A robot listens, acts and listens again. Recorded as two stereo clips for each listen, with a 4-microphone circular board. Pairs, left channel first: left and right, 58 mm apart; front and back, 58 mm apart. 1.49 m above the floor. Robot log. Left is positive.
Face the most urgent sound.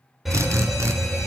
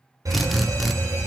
note: The fire alarm: 170° right.
cmd yaw -170
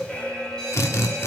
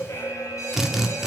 note: The fire alarm is now 15° left.
cmd yaw +15
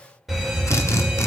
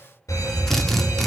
end: Facing the fire alarm.